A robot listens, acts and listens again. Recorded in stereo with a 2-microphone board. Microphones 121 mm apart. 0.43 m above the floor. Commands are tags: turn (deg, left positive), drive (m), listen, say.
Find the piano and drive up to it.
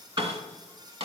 <turn deg="-35"/>
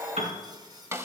<turn deg="-110"/>
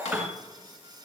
<turn deg="-15"/>
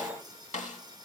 <listen/>
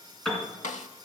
<drive m="1.0"/>
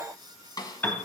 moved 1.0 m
<turn deg="15"/>
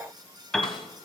<drive m="1.0"/>
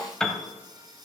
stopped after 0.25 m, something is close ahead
<say>Arrived at the piano, straight ahead.</say>